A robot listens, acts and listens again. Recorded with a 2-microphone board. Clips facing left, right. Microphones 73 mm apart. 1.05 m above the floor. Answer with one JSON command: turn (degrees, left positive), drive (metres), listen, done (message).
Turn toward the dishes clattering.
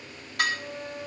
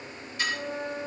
{"turn": 60}
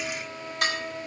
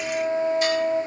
{"listen": true}
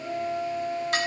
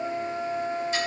{"turn": 60}
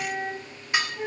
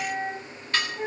{"turn": 15}
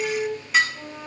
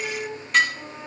{"done": "Found it: dishes clattering, straight ahead, 1 to 2 m away."}